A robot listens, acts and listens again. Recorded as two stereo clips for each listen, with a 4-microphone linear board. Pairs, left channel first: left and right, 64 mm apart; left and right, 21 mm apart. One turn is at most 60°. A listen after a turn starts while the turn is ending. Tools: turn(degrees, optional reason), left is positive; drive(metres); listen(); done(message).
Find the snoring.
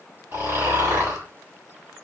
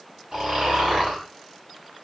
turn(degrees=-40, reason="The snoring: about 40° right or 140° right.")
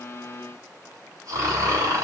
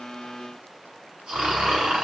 turn(degrees=-60, reason="So it is at 95° right.")
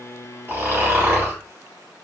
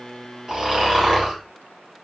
turn(degrees=-45, reason="The snoring is now 45° right.")
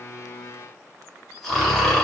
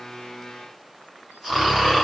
done("Facing the snoring, 1 to 2 m away.")